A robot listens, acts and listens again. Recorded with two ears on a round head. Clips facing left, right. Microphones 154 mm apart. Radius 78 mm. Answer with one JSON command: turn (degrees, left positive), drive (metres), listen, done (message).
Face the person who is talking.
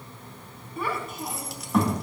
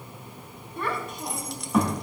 {"turn": -30}
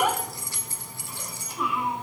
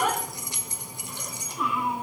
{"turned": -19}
{"turn": 30}
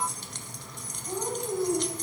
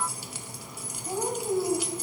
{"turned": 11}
{"turn": -25}
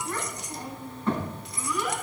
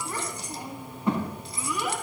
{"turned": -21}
{"turn": -10}
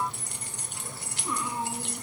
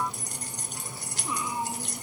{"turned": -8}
{"done": "Found it: a child speaking, straight ahead, 2 to 4 m away."}